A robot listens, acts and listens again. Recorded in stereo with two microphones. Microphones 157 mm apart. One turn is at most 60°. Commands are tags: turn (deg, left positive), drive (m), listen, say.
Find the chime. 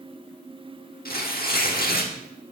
<listen/>
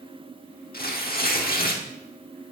<listen/>
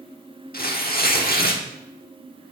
<say>I can't make out a chime, only tearing paper.</say>